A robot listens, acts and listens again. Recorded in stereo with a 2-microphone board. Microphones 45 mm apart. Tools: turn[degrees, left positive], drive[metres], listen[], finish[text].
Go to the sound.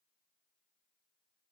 Action: listen[]
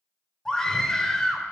Action: turn[30]
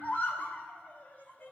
Thought: So it is at 135° left.
Action: turn[135]
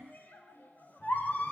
Thought: The scream is now 50° left.
Action: turn[50]
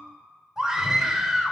Thought: The scream is now 15° right.
Action: turn[-15]
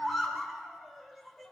Action: drive[1.0]
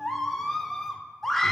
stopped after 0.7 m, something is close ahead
Thought: The scream is now 10° left.
Action: turn[10]
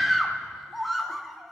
Action: finish[I am next to the scream.]